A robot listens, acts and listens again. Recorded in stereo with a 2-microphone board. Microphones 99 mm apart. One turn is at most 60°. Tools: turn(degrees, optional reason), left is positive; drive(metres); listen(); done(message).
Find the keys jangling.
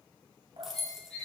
turn(degrees=30)
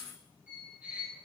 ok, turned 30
turn(degrees=60, reason="So it is at 155° left.")
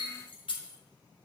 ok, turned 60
turn(degrees=60, reason="The keys jangling is now 95° left.")
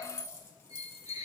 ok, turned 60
turn(degrees=35, reason="The keys jangling is now 35° left.")
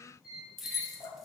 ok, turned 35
done("Found it: keys jangling, straight ahead.")